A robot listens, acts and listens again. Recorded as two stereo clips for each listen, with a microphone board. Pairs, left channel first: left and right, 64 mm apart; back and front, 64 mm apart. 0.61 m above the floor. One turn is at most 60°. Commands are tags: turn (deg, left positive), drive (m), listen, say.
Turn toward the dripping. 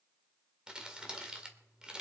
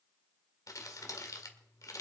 <listen/>
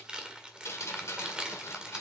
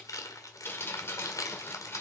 <turn deg="60"/>
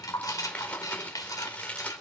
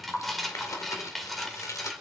<turn deg="60"/>
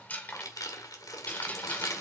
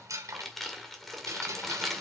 <turn deg="25"/>
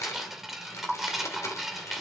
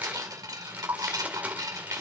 <say>Facing the dripping.</say>